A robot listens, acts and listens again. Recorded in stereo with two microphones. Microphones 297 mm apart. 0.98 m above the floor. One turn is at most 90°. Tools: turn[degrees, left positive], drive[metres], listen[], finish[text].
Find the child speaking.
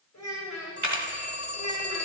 Thought: The child speaking: about 70° left or 110° left.
Action: turn[70]
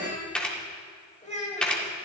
Thought: So it is at 20° left.
Action: turn[20]
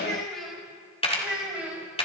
Action: finish[Facing the child speaking, over 4 m away.]